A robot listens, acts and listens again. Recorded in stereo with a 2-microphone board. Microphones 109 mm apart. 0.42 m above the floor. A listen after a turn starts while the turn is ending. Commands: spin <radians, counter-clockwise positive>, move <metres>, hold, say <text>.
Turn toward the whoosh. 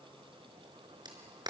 hold
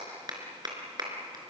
hold
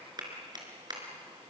say I can't make out a whoosh, only a clap.